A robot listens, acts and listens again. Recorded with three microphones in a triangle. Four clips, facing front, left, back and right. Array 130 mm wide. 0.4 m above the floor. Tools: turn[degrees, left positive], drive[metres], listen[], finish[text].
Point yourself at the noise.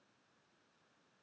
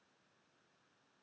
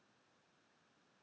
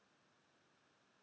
Action: listen[]
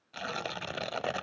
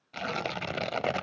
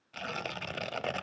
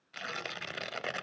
Thought: The tearing paper: 85° left.
Action: turn[85]
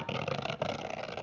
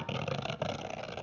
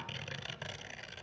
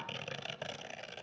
Thought: The tearing paper is now 35° left.
Action: turn[35]
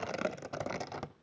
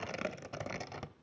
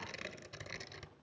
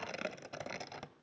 Action: finish[Facing the tearing paper, under 1 m away.]